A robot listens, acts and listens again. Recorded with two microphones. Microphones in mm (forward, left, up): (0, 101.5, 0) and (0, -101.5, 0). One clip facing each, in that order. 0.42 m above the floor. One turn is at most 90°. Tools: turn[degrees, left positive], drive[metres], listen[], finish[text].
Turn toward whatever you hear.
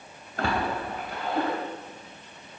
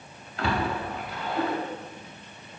Thought: The splash: about 50° left or 130° left.
Action: turn[50]
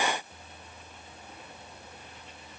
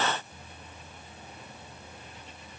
Action: listen[]
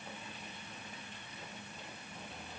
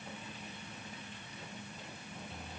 Action: finish[I heard a splash, but can't make it out now. It was about straight ahead or 80° left.]